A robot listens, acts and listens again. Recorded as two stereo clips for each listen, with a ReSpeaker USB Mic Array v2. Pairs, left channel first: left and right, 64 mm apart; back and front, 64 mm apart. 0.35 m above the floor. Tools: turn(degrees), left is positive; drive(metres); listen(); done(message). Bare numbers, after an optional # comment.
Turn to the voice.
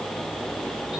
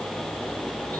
listen()
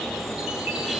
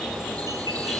listen()
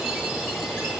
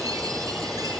done("I can't make out anyone speaking to turn to.")